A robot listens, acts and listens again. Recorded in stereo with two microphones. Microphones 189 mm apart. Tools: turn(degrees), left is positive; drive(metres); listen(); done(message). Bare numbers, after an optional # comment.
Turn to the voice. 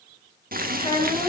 # The child speaking: about 25° left or 155° left.
turn(25)
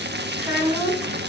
done("Found it: a child speaking, straight ahead.")